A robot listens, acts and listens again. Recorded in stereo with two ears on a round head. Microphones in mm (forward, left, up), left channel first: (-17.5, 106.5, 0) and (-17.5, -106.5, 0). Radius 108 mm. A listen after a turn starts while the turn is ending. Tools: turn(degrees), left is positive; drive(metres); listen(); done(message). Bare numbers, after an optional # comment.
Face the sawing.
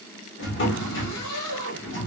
listen()
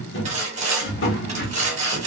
# The sawing: about 30° right or 150° right.
turn(-30)
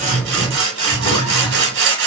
# So it is at 120° right.
turn(-120)
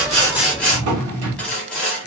done("Found it: sawing, straight ahead.")